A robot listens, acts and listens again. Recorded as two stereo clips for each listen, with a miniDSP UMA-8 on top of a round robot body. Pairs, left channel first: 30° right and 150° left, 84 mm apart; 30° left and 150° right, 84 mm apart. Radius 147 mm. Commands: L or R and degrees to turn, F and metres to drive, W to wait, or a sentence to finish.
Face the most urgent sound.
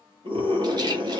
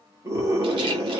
L155
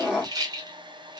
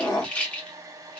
L70
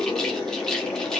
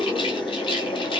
L20
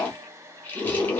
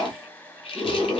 Facing the scream, 1 to 2 m away.